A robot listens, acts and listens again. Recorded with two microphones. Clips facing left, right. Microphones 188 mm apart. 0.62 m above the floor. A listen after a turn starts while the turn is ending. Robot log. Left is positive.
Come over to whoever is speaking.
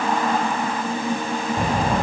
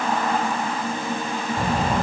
cmd yaw +30
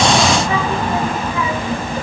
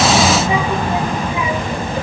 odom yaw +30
note: So it is at 15° right.
cmd yaw -15
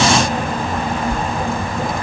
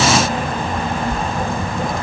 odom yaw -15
cmd fwd 1.0
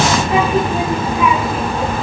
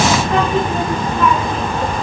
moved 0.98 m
cmd fwd 1.0
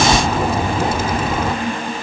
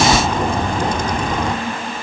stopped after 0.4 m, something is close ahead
end: I am next to the child speaking.